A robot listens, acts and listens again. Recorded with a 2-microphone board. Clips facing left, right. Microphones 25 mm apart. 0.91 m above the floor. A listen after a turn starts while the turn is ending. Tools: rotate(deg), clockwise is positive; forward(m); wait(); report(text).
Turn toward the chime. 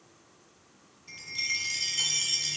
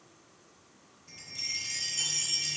rotate(-40)
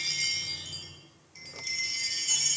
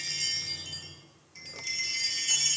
report("Found it: a chime, straight ahead, 1 to 2 m away.")